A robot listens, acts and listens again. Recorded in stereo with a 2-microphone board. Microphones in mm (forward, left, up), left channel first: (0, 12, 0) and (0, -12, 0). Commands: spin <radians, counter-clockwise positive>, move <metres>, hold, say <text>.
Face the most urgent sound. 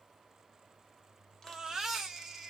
spin -0.35
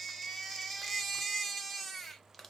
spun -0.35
say Found it: a baby crying, straight ahead.